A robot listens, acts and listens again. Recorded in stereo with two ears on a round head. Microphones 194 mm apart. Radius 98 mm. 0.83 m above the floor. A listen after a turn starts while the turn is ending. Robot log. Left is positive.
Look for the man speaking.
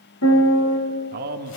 note: The man speaking: about 45° right or 135° right.
cmd yaw -45
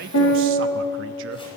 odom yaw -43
cmd idle
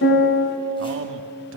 note: So it is at 85° right.
cmd yaw -85
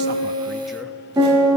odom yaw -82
cmd idle
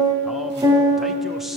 cmd idle
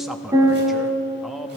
end: Found it: a man speaking, straight ahead.